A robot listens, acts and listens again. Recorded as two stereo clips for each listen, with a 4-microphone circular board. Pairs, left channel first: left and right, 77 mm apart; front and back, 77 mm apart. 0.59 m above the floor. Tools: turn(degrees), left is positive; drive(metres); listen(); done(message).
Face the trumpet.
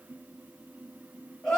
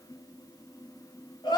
listen()
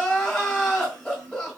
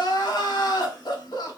listen()
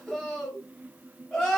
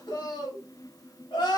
done("I can't make out a trumpet to turn to.")